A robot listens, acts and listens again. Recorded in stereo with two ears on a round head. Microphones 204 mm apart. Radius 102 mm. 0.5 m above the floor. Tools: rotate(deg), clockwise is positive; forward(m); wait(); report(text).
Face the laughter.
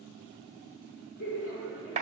rotate(-55)
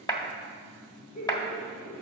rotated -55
rotate(-45)
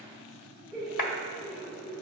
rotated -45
report("Found it: laughter, straight ahead, 1 to 2 m away.")